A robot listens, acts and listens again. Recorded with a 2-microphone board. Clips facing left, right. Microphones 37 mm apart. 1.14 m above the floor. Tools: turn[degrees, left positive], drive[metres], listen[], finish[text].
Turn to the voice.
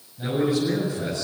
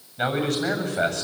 Action: turn[-90]
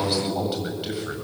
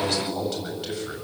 Thought: So it is at 15° left.
Action: turn[15]
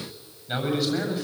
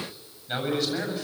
Action: finish[Facing the man speaking, over 4 m away.]